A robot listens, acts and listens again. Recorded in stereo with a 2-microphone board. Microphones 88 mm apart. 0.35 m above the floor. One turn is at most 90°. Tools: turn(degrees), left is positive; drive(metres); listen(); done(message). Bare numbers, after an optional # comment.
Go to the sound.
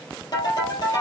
# The ringtone: about 45° left or 135° left.
turn(45)
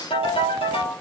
# So it is at 85° left.
turn(85)
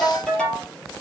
# The ringtone is now 10° left.
turn(10)
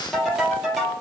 drive(1.0)
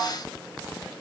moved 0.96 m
listen()
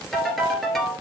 drive(1.0)
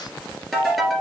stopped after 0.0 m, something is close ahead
done("Something is in my way. I am facing the ringtone but have not reached it.")